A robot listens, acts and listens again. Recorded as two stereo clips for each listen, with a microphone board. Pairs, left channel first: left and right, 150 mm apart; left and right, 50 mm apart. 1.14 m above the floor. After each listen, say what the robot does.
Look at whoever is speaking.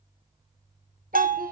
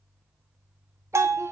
Turn 65° right.
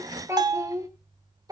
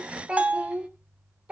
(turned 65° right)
Turn 25° right.
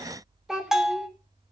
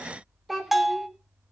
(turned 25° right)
Facing the child speaking, 2 to 4 m away.